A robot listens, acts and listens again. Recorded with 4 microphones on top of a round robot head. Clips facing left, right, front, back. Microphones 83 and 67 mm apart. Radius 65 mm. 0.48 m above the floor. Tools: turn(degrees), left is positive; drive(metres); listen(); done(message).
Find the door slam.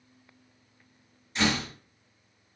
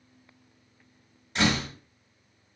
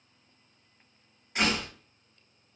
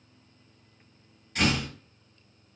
turn(degrees=-70)
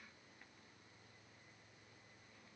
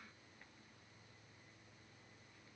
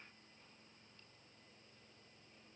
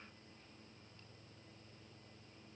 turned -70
done("Facing where the door slam came from. I can't hear it now.")